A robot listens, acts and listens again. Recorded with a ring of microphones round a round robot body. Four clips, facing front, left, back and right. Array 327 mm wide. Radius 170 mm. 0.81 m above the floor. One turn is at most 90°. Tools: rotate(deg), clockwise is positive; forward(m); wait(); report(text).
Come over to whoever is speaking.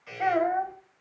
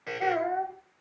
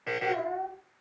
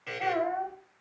rotate(-15)
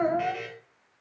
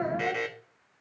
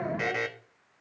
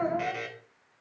forward(1.0)
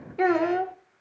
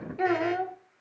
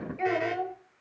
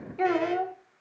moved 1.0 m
forward(1.0)
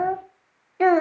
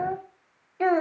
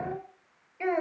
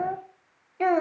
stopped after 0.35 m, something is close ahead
report("Arrived at the child speaking, straight ahead.")